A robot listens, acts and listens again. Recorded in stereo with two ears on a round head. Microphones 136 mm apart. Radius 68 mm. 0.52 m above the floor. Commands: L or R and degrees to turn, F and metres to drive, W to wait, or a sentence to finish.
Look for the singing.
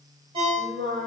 R60
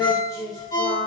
L30
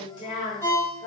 L45
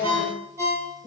L20
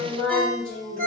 Found it: singing, straight ahead, 2 to 4 m away.